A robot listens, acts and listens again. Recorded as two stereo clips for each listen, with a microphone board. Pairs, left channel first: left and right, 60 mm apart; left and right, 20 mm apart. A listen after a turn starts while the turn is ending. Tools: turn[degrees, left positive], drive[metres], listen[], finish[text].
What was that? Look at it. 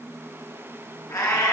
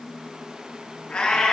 Action: turn[90]
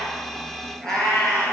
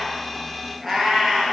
Thought: So it is at 10° left.
Action: turn[10]
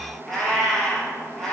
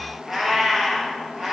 Action: finish[Facing the cat meowing, 2 to 4 m away.]